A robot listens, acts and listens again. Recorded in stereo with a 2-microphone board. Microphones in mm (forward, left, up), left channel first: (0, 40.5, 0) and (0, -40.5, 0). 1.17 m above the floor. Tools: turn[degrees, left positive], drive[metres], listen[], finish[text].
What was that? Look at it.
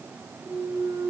Thought: The clunk: about 45° right or 135° right.
Action: turn[-45]
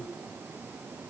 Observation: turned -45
Action: listen[]
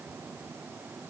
Action: finish[I heard a clunk, but can't make it out now. It was about straight ahead or 90° right.]